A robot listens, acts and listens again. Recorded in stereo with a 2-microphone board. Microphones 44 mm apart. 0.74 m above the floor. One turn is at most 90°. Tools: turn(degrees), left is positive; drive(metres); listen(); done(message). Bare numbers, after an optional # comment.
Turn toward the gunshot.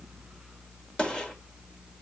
# The gunshot: about 20° left or 160° left.
turn(20)
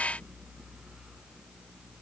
listen()
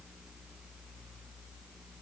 done("I heard a gunshot, but can't make it out now. It was about straight ahead or 140° left.")